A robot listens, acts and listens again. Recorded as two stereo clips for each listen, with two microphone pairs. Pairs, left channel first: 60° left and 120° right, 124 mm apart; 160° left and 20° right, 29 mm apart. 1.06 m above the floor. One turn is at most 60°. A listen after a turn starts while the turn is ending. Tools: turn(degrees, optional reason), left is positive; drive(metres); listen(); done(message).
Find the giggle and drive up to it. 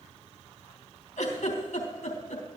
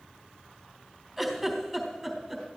turn(degrees=60, reason="The giggle: 75° left.")
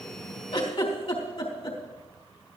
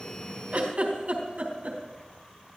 turn(degrees=25, reason="The giggle is now 25° left.")
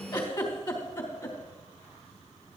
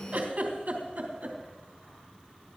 turn(degrees=10, reason="The giggle is now 10° left.")
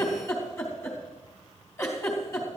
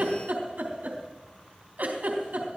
drive(metres=1.0)
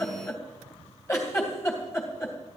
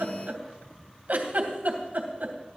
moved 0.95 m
drive(metres=1.0)
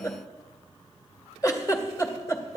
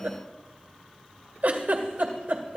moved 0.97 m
drive(metres=1.0)
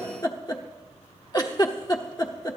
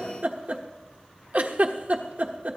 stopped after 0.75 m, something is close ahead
turn(degrees=10, reason="The giggle is now 10° left.")
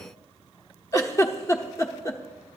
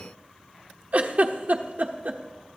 done("I am next to the giggle.")